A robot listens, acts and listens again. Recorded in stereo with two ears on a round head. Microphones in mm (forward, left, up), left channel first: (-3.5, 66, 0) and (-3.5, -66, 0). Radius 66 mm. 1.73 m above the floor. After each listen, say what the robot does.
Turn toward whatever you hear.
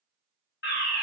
Turn 90° left.
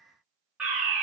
Facing the fire alarm.